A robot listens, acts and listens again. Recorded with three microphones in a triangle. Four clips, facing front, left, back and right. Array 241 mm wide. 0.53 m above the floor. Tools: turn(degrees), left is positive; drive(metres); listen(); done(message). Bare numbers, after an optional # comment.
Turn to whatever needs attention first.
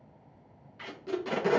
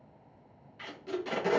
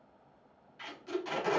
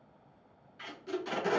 listen()
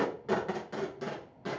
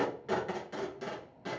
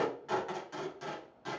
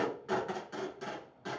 listen()
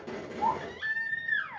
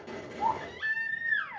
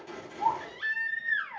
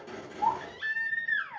# The baby crying: 120° left.
turn(120)
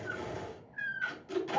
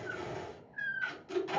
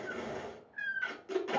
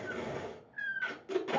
# The baby crying is now 15° right.
turn(-15)
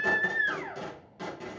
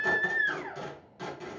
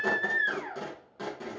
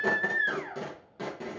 done("Facing the baby crying, 1 to 2 m away.")